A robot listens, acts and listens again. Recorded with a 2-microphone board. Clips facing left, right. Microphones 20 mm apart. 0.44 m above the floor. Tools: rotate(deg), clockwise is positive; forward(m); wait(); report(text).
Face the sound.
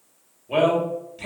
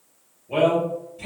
rotate(-50)
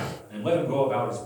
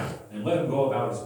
rotate(-65)
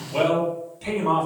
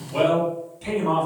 rotate(-15)
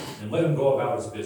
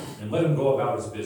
report("Facing the man speaking.")